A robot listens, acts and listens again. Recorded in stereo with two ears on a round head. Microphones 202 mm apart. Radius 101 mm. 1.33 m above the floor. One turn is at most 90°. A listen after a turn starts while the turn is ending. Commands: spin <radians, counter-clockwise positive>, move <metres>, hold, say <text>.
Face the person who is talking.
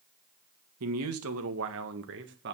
spin -0.79
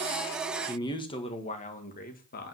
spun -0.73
spin 0.70
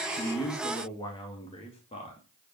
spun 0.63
spin 0.44
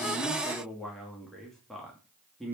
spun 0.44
say Found it: a man speaking, straight ahead, 2 to 4 m away.